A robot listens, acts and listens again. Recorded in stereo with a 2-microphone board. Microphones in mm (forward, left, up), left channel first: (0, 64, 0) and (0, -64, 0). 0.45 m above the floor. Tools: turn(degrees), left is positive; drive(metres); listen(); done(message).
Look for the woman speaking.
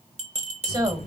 turn(degrees=-35)
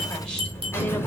listen()
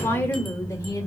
turn(degrees=20)
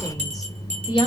turn(degrees=40)
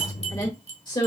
turn(degrees=40)
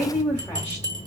turn(degrees=15)
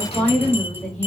done("Facing the woman speaking.")